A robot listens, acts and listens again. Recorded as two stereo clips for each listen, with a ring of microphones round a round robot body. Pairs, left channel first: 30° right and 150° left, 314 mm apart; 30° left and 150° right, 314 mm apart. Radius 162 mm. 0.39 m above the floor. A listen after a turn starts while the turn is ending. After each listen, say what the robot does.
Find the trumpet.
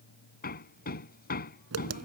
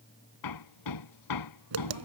Keep listening.
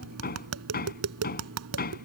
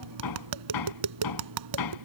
Keep listening.
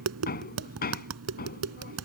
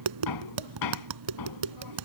I can't make out a trumpet to turn to.